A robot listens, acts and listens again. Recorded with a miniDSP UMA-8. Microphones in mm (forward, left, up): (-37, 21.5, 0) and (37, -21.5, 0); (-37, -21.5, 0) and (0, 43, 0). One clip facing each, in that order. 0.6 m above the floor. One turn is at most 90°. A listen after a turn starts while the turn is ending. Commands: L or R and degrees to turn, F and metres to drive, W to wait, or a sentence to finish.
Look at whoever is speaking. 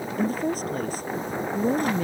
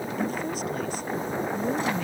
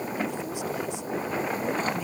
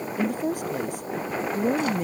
L90
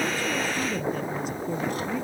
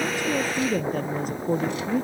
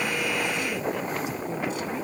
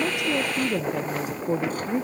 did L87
L15
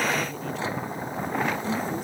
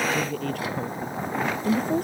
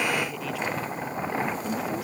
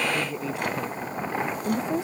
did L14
Found it: a woman speaking, straight ahead.